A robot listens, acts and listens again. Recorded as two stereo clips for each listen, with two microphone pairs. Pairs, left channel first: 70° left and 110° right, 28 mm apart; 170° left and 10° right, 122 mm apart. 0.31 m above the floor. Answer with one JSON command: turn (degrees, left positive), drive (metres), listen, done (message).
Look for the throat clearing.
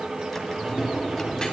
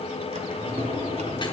{"listen": true}
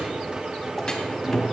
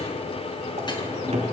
{"listen": true}
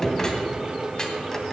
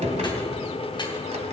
{"done": "I can't make out throat clearing, only a drawer."}